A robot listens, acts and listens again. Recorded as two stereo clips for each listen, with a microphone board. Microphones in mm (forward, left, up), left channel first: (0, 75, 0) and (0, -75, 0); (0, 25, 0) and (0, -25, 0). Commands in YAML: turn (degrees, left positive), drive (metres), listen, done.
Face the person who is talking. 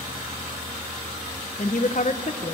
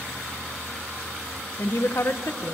turn: 55
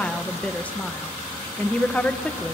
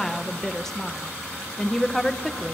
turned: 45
turn: 10
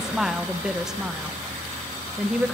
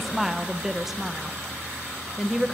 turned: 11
done: "Found it: a woman speaking, straight ahead."